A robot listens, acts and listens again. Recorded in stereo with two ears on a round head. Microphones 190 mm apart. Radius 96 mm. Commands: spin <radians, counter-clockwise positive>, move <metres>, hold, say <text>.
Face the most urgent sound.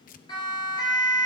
spin 0.35
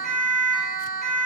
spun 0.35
say Found it: a siren, straight ahead, over 4 m away.